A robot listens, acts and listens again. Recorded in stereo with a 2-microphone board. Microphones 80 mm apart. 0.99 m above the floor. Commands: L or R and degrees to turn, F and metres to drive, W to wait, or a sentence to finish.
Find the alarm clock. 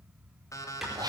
L45
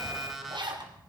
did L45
Facing the alarm clock, 2 to 4 m away.